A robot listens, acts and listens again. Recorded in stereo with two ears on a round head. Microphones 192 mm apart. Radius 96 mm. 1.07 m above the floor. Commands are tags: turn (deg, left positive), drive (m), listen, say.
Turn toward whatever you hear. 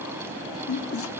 <turn deg="70"/>
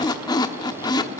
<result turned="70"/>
<turn deg="20"/>
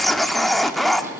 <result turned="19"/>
<say>Found it: a squeak, straight ahead.</say>